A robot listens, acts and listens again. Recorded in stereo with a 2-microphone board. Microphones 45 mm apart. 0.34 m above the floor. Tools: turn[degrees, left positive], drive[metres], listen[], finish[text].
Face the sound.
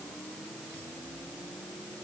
Action: listen[]
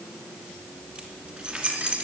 Thought: The keys jangling: about 25° right or 155° right.
Action: turn[-25]
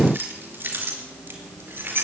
Thought: So it is at 120° right.
Action: turn[-120]
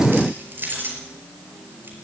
Thought: The keys jangling is now 50° right.
Action: turn[-50]
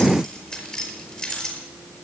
Thought: The keys jangling is now 20° left.
Action: turn[20]
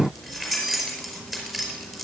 Action: finish[Facing the keys jangling, over 4 m away.]